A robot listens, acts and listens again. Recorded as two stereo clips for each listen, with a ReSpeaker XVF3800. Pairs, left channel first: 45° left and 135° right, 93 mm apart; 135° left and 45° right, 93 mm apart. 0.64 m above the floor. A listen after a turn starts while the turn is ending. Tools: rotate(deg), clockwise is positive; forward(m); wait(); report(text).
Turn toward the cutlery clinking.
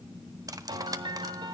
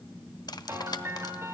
rotate(-175)
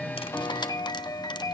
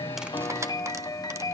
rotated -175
wait()
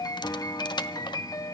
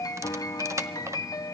rotate(-10)
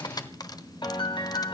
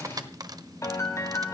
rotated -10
report("Found it: cutlery clinking, straight ahead, 1 to 2 m away.")